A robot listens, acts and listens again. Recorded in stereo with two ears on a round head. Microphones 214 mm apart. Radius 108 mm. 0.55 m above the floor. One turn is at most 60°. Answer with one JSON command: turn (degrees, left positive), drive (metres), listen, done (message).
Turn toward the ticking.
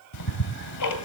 {"turn": 60}
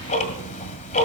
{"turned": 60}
{"turn": 30}
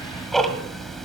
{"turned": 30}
{"done": "Found it: ticking, straight ahead."}